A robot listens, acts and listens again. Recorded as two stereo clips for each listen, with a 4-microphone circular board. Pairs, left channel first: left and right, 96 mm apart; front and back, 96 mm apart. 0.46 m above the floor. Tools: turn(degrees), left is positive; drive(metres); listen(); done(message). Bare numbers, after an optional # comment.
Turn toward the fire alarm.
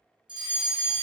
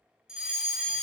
# The fire alarm: 100° right.
turn(-100)
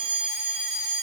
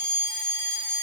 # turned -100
# The fire alarm is now 10° right.
turn(-10)
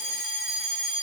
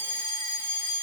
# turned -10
done("Facing the fire alarm, 2 to 4 m away.")